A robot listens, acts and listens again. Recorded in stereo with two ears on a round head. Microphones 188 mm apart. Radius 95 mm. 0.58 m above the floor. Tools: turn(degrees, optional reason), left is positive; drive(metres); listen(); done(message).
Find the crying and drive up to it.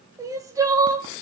turn(degrees=-15, reason="The crying: about 15° right or 165° right.")
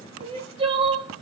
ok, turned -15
turn(degrees=-150, reason="So it is at 150° right.")
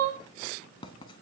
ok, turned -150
turn(degrees=-55, reason="The crying is now 55° right.")
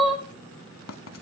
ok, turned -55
drive(metres=1.0)
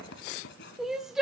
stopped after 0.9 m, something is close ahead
done("I am next to the crying.")